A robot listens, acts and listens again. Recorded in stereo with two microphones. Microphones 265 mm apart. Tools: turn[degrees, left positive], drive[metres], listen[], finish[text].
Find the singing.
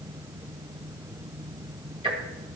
Action: listen[]
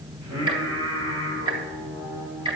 Thought: The singing: about 60° right or 120° right.
Action: turn[-60]
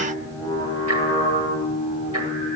Thought: So it is at 25° left.
Action: turn[25]
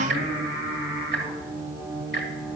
Thought: The singing is now 10° right.
Action: turn[-10]
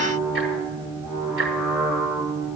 Action: finish[Found it: singing, straight ahead, over 4 m away.]